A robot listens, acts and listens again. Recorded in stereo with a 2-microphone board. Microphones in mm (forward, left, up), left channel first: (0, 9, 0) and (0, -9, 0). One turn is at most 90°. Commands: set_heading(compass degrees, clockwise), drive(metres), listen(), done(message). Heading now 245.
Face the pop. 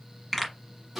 set_heading(215)
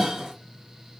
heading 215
listen()
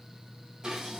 done("I heard a pop, but can't make it out now. It was about 25° right or 145° left.")